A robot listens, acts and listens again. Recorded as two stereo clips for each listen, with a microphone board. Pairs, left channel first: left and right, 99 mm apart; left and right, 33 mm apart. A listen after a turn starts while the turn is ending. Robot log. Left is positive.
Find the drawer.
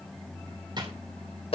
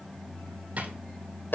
note: The drawer: about 50° right or 130° right.
cmd yaw -50
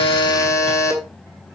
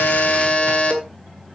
cmd idle
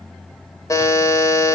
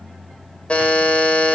cmd idle
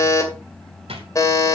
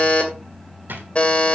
note: So it is at 80° right.
cmd yaw -80
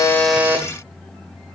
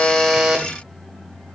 cmd idle
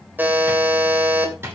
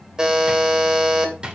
note: The drawer is now 25° right.
cmd yaw -25
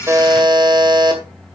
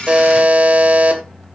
cmd idle
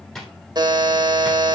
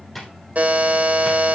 end: Found it: a drawer, straight ahead.